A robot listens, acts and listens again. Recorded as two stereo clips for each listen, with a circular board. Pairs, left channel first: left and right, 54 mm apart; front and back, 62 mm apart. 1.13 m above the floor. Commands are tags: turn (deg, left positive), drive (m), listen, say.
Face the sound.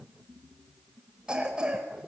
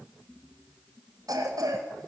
<turn deg="-165"/>
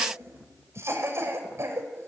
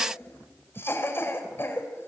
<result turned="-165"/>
<turn deg="-50"/>
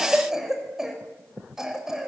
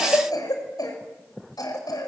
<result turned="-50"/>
<turn deg="-10"/>
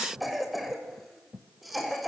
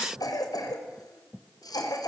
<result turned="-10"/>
<say>Facing the cough.</say>